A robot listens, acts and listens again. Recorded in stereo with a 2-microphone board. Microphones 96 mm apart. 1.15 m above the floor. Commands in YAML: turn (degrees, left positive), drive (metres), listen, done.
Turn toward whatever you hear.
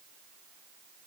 listen: true
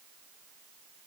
listen: true
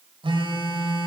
turn: -60
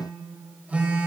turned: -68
turn: -20
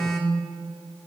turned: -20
done: "Found it: a phone buzzing, straight ahead, 1 to 2 m away."